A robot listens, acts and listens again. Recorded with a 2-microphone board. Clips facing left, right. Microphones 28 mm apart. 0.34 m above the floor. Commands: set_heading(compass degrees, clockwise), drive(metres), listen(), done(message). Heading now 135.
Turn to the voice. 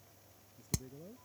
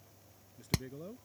set_heading(225)
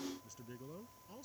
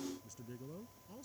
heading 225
set_heading(210)
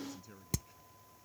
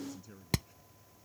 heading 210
done("Found it: a man speaking, straight ahead.")